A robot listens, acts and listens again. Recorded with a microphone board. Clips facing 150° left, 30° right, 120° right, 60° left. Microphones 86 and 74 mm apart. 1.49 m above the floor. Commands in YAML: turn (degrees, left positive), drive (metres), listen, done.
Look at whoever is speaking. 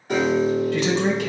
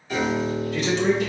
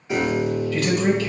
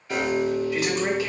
turn: 135
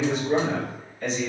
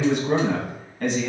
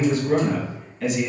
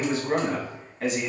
done: "Found it: a man speaking, straight ahead, 1 to 2 m away."